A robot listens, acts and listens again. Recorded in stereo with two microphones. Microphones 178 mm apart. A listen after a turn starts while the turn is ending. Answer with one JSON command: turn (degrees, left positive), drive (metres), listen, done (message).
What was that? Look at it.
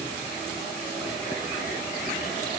{"listen": true}
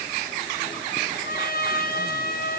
{"turn": 55}
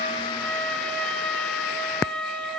{"done": "Facing the trumpet."}